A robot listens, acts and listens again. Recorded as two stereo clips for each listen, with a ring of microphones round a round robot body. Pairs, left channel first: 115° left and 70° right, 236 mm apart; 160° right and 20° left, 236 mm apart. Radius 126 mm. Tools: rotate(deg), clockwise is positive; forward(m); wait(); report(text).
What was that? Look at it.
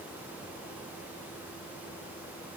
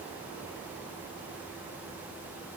wait()
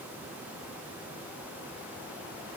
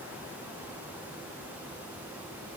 wait()
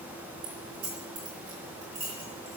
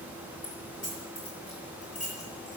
rotate(95)
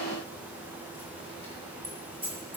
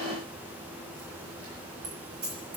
report("Facing the keys jangling.")